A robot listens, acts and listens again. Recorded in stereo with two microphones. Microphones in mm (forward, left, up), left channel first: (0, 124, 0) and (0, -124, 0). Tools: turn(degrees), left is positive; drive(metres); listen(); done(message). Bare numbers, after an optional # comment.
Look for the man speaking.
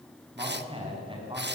# The man speaking: about 20° right or 160° right.
turn(-20)
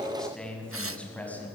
done("Facing the man speaking, over 4 m away.")